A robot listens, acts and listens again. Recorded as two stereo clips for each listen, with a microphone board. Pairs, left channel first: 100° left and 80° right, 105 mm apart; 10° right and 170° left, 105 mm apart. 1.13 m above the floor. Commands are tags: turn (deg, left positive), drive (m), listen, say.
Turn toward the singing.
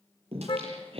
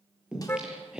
<turn deg="-105"/>
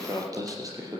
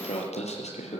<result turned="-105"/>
<turn deg="-20"/>
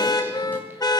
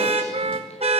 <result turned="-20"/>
<listen/>
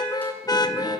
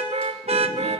<listen/>
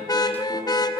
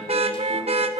<say>I heard singing from this way, but can't make it out now.</say>